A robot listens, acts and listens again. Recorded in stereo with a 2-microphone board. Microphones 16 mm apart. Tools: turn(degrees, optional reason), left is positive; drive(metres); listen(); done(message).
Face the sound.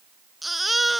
turn(degrees=30)
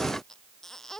listen()
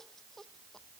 listen()
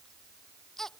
turn(degrees=150, reason="So it is at 150° left.")
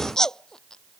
turn(degrees=35, reason="The baby crying is now 35° left.")
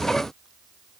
listen()
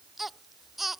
turn(degrees=-15, reason="The baby crying is now 15° right.")
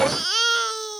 done("Facing the baby crying.")